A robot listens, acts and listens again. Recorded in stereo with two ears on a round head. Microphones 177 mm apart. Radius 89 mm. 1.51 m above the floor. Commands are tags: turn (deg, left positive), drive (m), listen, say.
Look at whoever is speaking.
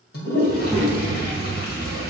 <turn deg="30"/>
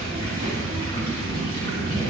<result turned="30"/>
<turn deg="-30"/>
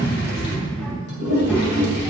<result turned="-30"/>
<say>Facing the child speaking.</say>